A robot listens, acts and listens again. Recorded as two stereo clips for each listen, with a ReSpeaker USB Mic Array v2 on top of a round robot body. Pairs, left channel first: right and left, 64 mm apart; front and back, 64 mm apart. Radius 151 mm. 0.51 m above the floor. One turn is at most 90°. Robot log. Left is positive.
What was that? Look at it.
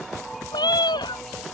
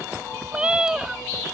note: The cat meowing: 100° right.
cmd yaw -90
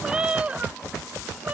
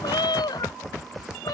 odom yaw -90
note: The cat meowing is now 25° left.
cmd yaw +25
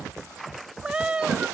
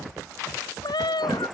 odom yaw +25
note: The cat meowing is now 15° left.
cmd yaw +15
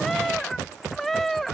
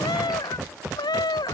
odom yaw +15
end: Found it: a cat meowing, straight ahead.